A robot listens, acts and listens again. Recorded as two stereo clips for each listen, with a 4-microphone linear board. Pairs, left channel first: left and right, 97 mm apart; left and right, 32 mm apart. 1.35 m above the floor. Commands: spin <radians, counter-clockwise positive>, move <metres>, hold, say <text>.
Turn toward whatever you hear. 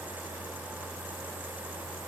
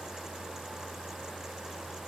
hold
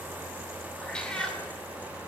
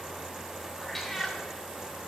spin 0.52
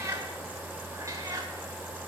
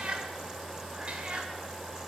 spin -0.61
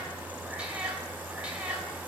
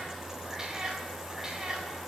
spin -0.26
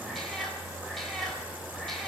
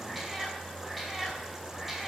say Facing the cat meowing.